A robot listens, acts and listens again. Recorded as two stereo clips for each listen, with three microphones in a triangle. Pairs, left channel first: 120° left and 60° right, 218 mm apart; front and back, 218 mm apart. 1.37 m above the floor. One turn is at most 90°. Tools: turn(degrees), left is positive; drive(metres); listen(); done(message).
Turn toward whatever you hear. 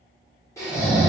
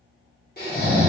turn(degrees=45)
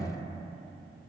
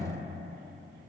listen()
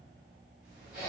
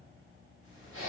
done("Found it: snoring, straight ahead, 1 to 2 m away.")